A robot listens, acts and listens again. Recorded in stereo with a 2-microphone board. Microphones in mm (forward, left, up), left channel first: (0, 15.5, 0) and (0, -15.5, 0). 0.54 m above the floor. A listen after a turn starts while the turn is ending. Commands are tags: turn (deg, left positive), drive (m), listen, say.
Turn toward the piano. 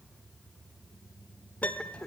<turn deg="65"/>
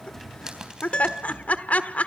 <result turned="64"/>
<turn deg="40"/>
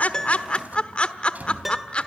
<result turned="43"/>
<say>Facing the piano, 1 to 2 m away.</say>